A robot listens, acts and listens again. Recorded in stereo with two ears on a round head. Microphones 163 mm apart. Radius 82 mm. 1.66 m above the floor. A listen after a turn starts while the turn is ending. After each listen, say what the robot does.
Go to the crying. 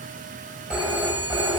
Keep listening.
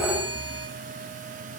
Keep listening.
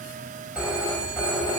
I can't make out crying to turn to.